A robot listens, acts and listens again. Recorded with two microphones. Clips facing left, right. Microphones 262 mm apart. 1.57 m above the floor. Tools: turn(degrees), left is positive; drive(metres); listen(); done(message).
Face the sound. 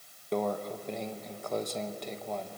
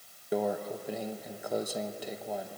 turn(degrees=-30)
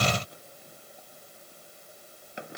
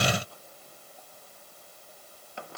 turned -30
listen()
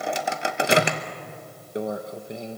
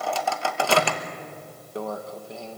turn(degrees=20)
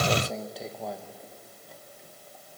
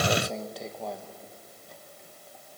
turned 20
done("Found it: a microwave, straight ahead, 1 to 2 m away.")